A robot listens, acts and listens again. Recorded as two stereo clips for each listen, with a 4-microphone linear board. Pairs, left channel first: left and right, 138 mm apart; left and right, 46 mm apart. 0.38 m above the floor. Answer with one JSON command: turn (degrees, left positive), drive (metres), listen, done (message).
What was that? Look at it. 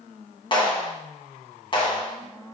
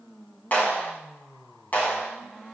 {"turn": 35}
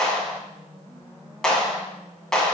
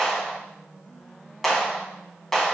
{"done": "Facing the clap."}